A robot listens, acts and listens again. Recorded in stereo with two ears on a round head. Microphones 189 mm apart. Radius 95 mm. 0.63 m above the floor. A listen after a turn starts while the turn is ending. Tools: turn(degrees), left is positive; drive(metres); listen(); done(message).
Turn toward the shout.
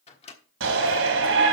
turn(degrees=-70)
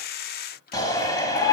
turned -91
turn(degrees=20)
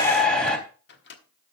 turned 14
done("Found it: a shout, straight ahead, 2 to 4 m away.")